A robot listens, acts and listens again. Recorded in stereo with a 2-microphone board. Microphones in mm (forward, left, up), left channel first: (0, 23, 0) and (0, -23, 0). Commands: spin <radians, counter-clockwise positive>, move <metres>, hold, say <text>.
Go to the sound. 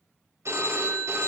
spin -1.57
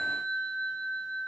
spin 0.17
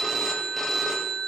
move 1.0
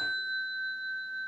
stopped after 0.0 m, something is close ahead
say Something is in my way. I am facing the phone ringing but have not reached it.